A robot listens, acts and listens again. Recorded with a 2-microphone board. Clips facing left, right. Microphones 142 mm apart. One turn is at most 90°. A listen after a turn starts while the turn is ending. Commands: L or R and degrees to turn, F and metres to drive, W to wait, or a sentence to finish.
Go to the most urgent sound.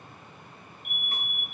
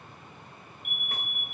R55
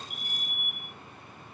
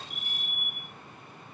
F1.0
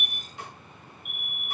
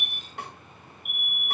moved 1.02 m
R10
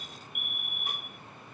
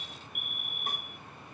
F1.0
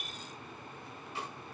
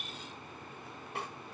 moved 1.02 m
W
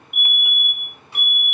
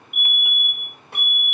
F1.0
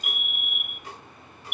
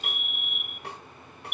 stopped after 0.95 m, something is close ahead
L10
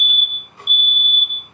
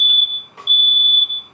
I am next to the fire alarm.